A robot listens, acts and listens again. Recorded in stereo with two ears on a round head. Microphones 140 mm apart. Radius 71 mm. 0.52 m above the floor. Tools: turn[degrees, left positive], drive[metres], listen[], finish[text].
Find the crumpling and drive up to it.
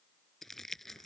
Action: turn[30]
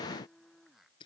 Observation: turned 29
Thought: So it is at 150° left.
Action: turn[150]
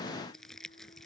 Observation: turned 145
Action: drive[1.0]
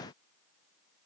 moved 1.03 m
Action: listen[]
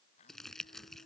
Action: drive[1.0]
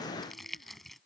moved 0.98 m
Action: drive[1.0]
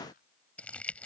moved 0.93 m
Thought: The crumpling is now 10° left.
Action: turn[10]
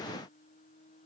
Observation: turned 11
Action: listen[]
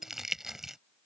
Action: drive[1.0]
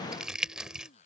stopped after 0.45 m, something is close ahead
Action: finish[I am next to the crumpling.]